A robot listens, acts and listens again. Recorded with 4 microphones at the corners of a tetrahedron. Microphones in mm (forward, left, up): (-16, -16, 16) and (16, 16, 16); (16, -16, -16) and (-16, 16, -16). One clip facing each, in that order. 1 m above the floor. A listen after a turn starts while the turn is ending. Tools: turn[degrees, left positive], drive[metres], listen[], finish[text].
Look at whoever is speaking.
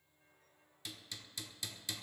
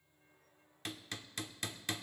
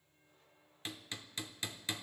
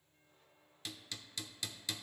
Action: listen[]
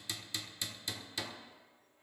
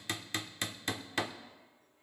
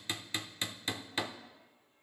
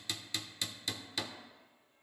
Action: listen[]
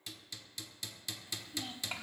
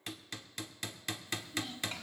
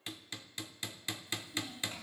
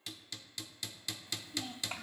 Thought: The child speaking: 155° left.
Action: turn[155]
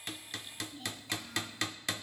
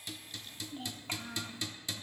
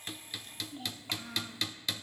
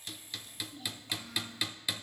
Action: finish[Facing the child speaking, 1 to 2 m away.]